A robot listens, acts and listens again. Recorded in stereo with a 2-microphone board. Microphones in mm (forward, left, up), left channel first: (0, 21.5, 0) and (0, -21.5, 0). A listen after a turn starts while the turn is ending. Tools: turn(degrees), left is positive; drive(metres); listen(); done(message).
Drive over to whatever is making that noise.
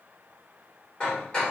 turn(degrees=25)
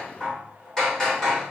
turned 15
turn(degrees=10)
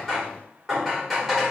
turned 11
drive(metres=1.0)
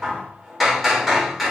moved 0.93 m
drive(metres=1.0)
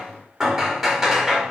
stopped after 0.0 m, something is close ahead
done("Arrived at the hammering, straight ahead.")